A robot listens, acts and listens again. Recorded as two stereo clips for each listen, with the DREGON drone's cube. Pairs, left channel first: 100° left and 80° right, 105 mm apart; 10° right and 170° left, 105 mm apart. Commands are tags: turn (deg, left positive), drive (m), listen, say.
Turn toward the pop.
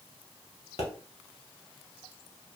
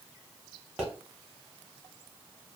<turn deg="85"/>
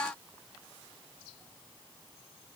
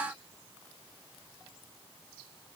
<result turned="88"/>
<say>I heard a pop from this way, but can't make it out now.</say>